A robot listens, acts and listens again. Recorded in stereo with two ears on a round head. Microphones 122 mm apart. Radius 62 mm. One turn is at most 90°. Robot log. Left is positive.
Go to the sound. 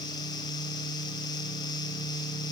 cmd idle
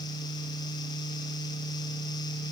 cmd idle
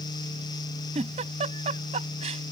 note: The giggle: about 55° right or 125° right.
cmd yaw -55
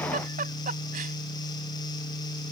note: So it is at 65° right.
cmd yaw -65
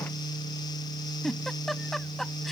cmd fwd 1.0
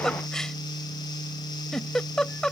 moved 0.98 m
cmd fwd 1.0
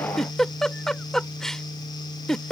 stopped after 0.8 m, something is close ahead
end: I am next to the giggle.